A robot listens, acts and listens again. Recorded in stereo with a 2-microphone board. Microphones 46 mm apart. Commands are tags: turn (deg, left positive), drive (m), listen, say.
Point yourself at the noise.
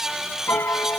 <turn deg="60"/>
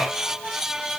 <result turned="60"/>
<listen/>
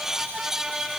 <listen/>
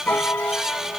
<turn deg="55"/>
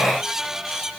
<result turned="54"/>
<listen/>
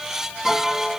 <say>Found it: a piano, straight ahead.</say>